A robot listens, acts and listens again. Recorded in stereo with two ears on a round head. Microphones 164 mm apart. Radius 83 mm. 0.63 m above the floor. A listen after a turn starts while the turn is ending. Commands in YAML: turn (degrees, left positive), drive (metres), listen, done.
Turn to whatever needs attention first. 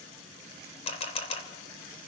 listen: true
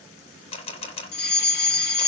turn: 60
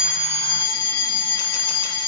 turn: 25
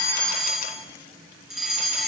done: "Facing the fire alarm, 2 to 4 m away."